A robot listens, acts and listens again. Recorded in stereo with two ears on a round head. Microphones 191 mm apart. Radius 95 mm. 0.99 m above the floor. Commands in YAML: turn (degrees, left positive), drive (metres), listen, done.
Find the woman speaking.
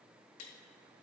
listen: true
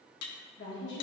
turn: 55
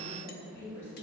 turn: 15
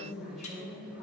done: "Found it: a woman speaking, straight ahead, 2 to 4 m away."